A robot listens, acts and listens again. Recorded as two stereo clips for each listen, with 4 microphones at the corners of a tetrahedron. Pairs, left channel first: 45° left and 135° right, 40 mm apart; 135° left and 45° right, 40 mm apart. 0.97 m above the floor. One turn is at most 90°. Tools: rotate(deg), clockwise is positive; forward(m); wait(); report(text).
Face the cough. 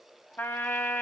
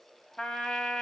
wait()
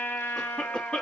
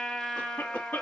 rotate(-90)
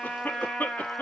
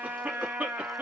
rotate(-10)
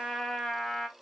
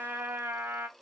wait()
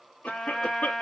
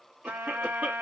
report("Found it: a cough, straight ahead.")